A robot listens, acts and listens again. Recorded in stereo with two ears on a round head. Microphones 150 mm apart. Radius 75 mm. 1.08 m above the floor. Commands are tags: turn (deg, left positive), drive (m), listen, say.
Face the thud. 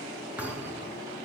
<turn deg="-30"/>
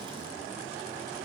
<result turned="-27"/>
<listen/>
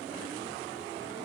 <say>I heard a thud, but can't make it out now. It was about 20° left or 145° right.</say>